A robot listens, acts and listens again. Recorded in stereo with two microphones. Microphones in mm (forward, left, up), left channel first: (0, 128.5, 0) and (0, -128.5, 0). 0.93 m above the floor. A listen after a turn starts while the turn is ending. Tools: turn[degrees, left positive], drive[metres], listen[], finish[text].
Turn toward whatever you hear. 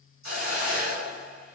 Action: turn[90]
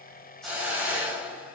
Action: finish[Found it: a hiss, straight ahead.]